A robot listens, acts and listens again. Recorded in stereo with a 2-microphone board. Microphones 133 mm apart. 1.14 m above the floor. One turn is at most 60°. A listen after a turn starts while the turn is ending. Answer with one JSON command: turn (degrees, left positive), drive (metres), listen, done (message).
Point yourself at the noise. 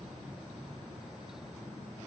{"listen": true}
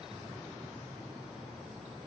{"listen": true}
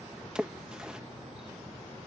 {"turn": -30}
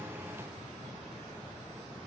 {"listen": true}
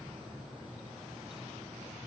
{"done": "I heard a splash, but can't make it out now. It was about 25° left or 145° right."}